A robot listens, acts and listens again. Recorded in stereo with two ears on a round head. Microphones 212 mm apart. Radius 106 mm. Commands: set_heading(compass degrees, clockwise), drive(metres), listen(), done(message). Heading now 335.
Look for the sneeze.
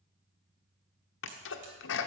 set_heading(280)
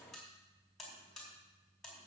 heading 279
listen()
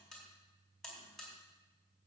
done("I heard a sneeze, but can't make it out now. It was about straight ahead or 70° left.")